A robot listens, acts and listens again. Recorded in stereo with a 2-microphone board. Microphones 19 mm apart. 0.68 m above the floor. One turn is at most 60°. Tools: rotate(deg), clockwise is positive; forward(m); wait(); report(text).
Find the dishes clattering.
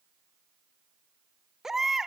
wait()
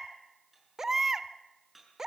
rotate(30)
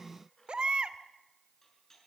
rotate(-25)
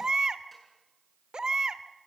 wait()
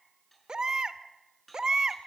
rotate(-10)
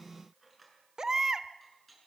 report("Facing the dishes clattering, over 4 m away.")